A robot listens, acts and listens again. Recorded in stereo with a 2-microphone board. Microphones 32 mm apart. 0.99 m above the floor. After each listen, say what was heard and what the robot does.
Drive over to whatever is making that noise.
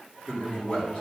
The man speaking: about 35° left or 145° left. Turn 35° left.
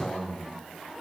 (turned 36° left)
So it is at 110° left. Turn 110° left.
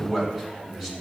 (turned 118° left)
The man speaking is now 10° right. Turn 10° right.
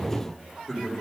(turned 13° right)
Drive 1.0 m forward.
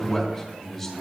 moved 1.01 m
The man speaking is now 10° left. Turn 10° left.
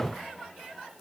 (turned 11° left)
Keep listening.
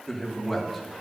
Drive 1.0 m forward.
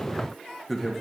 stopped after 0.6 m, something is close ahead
Arrived at the man speaking, straight ahead.